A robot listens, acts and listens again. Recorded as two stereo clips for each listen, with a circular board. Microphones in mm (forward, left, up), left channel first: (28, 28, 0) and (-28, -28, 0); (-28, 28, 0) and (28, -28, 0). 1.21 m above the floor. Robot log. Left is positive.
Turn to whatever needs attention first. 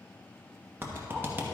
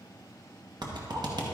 cmd idle
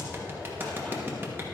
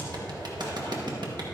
cmd idle
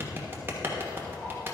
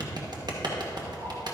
end: I can't make out anything urgent, only a clap.